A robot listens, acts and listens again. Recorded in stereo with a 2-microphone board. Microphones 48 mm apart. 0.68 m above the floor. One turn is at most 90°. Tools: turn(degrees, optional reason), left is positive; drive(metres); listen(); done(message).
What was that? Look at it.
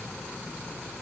listen()
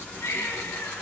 turn(degrees=70, reason="The baby crying: about 70° left or 110° left.")
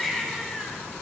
done("Found it: a baby crying, straight ahead, over 4 m away.")